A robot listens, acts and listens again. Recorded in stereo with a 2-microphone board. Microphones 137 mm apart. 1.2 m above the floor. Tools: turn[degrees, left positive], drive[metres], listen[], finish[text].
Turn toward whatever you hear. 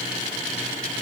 Action: listen[]
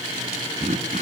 Thought: The throat clearing: about 65° right or 115° right.
Action: turn[-65]
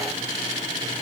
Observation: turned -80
Action: listen[]
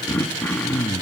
Thought: So it is at 15° left.
Action: turn[15]
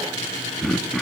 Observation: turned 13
Action: finish[Found it: throat clearing, straight ahead, 1 to 2 m away.]